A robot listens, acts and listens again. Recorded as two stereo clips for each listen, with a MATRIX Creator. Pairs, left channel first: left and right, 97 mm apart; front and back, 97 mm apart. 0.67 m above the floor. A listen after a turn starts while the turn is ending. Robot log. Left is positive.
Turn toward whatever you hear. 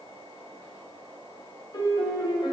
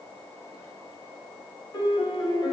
note: The piano: 45° left.
cmd yaw +45
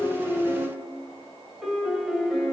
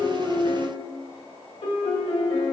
end: Facing the piano, under 1 m away.